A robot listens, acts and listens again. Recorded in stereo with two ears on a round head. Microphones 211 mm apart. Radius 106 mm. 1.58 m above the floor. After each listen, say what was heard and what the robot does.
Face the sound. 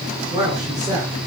The man speaking: about 20° right or 160° right. Turn 20° right.
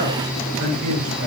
So it is at 140° right. Turn 140° right.
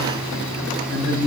The man speaking is now 60° right. Turn 60° right.
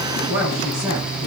The man speaking is now 10° right. Turn 10° right.
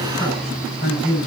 Found it: a man speaking, straight ahead.